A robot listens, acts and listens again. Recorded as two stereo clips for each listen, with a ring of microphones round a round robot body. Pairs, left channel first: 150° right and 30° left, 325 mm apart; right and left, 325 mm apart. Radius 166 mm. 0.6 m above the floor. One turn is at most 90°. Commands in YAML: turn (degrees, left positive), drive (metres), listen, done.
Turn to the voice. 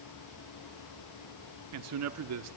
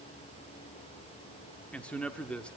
done: "Found it: a man speaking, straight ahead."